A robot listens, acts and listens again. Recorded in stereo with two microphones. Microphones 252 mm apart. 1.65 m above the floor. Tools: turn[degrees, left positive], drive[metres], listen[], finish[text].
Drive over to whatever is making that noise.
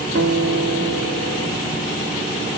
Thought: The guitar: about 75° right or 105° right.
Action: turn[-75]
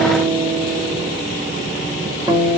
Thought: So it is at 15° right.
Action: turn[-15]
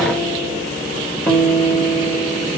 Action: drive[1.0]
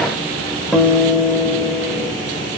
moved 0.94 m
Action: drive[1.0]
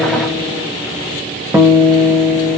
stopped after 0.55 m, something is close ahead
Thought: The guitar is now 10° right.
Action: turn[-10]
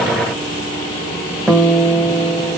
Action: finish[I am next to the guitar.]